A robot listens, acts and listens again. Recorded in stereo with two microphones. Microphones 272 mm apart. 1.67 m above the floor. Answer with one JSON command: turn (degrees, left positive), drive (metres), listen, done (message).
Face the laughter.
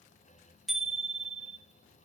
{"listen": true}
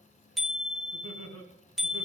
{"turn": -65}
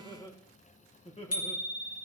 {"turn": 25}
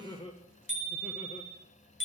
{"turn": 20}
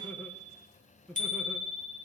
{"done": "Facing the laughter, 1 to 2 m away."}